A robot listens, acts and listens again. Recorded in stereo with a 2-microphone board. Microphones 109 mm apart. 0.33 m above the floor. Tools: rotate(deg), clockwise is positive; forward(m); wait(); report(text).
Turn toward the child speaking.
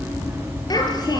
rotate(-40)
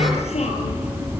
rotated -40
rotate(-100)
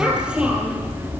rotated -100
rotate(10)
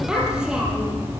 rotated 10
rotate(10)
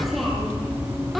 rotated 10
report("Facing the child speaking, over 4 m away.")